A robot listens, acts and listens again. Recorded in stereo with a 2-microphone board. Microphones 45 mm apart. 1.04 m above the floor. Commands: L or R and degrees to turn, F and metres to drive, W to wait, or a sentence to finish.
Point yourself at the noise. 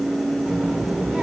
R35
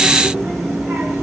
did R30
R110
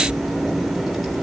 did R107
Facing the child speaking, 2 to 4 m away.